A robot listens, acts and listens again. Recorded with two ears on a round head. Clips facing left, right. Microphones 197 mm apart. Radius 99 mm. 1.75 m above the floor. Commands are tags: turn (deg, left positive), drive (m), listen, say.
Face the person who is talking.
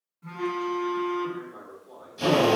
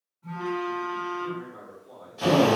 <turn deg="30"/>
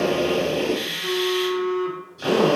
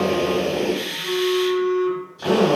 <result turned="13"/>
<listen/>
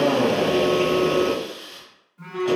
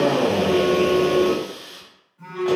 <listen/>
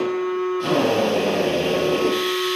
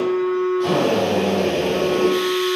<say>I heard a man speaking, but can't make it out now. It was about 15° left or 140° left.</say>